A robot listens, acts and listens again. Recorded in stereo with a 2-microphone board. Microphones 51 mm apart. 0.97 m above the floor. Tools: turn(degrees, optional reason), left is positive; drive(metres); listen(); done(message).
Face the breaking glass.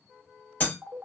turn(degrees=40, reason="The breaking glass: about 40° left or 140° left.")
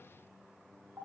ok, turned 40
listen()
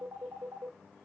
done("I heard breaking glass, but can't make it out now. It was about straight ahead or 100° left.")